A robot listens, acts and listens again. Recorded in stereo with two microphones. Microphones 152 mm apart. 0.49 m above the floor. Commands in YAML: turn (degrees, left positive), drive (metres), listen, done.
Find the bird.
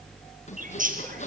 turn: -60
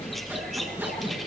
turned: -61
listen: true
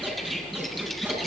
listen: true
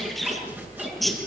done: "Facing the bird."